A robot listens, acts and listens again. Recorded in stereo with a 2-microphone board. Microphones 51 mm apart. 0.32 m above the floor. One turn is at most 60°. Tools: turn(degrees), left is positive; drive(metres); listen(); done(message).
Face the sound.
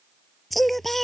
turn(degrees=30)
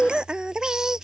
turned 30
turn(degrees=-15)
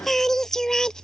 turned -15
turn(degrees=10)
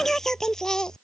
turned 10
turn(degrees=10)
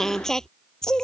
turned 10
turn(degrees=10)
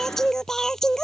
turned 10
turn(degrees=10)
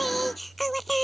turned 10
done("Facing the singing.")